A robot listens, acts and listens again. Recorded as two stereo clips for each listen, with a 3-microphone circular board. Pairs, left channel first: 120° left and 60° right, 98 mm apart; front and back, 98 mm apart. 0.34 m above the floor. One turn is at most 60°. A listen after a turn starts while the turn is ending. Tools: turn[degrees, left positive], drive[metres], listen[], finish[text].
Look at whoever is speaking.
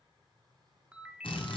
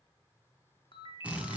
Action: listen[]
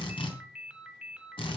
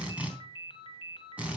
Action: listen[]
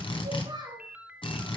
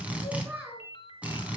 Thought: The child speaking: 105° right.
Action: turn[-60]
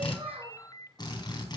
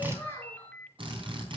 Thought: Nothing new. It was at 45° right.
Action: turn[-45]
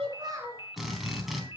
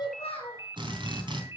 Action: finish[Found it: a child speaking, straight ahead, 2 to 4 m away.]